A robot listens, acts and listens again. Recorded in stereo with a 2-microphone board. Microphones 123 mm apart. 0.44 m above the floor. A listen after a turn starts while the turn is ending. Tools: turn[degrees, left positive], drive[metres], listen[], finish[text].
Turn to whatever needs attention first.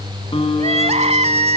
Thought: The crying: about 65° right or 115° right.
Action: turn[-65]
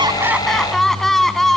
Action: finish[Facing the crying.]